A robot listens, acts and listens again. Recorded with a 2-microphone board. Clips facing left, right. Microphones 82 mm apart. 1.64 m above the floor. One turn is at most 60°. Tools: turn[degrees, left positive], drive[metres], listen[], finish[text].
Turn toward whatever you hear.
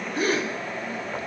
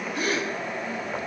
Thought: The gasp: about 35° left or 145° left.
Action: turn[35]
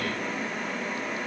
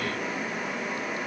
Action: listen[]
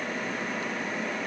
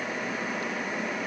Action: finish[I heard a gasp, but can't make it out now. It was about straight ahead or 110° left.]